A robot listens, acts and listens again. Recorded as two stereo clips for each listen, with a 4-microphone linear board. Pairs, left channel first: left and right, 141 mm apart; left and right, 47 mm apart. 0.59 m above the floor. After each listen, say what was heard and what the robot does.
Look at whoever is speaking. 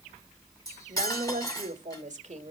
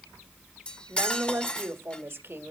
The woman speaking: about 55° right or 125° right. Turn 55° right.
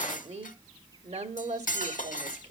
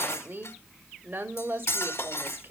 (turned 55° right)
So it is at 60° right. Turn 60° right.
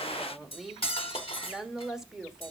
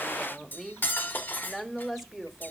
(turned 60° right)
Facing the woman speaking.